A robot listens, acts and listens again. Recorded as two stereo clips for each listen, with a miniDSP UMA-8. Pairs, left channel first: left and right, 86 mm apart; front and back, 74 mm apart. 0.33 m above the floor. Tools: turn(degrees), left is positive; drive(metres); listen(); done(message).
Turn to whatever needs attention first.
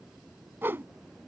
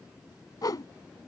listen()
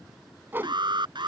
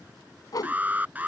turn(degrees=-115)
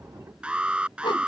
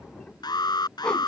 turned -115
turn(degrees=-10)
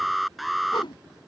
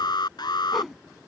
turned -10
done("Found it: an alarm, straight ahead.")